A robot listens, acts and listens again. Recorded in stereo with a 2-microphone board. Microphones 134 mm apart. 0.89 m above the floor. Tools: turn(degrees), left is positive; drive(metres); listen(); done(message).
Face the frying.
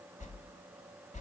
listen()
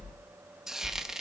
turn(degrees=-30)
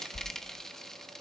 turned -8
turn(degrees=30)
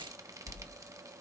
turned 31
listen()
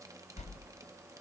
listen()
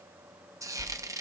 turn(degrees=-25)
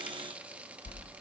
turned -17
turn(degrees=-10)
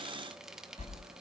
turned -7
done("Facing the frying.")